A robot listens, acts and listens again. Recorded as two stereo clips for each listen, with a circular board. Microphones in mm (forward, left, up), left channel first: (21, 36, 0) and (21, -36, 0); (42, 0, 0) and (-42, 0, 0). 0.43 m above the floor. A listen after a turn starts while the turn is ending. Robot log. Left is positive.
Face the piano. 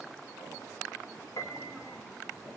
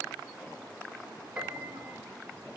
note: The piano: 110° left.
cmd yaw +110
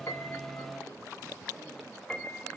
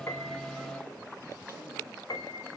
note: The piano is now 10° left.
cmd yaw +10
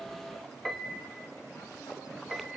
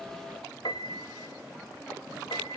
end: Found it: a piano, straight ahead, 1 to 2 m away.